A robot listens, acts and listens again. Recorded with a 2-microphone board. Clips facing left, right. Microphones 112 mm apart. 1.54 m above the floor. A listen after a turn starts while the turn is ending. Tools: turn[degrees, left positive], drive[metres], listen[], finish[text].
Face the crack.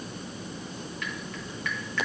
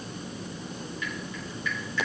Action: listen[]
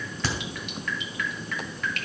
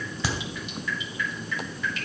Action: turn[-30]
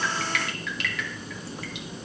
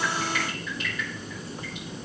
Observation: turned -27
Action: listen[]
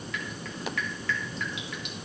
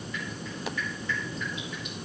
Action: finish[I heard a crack, but can't make it out now. It was about 15° left or 140° right.]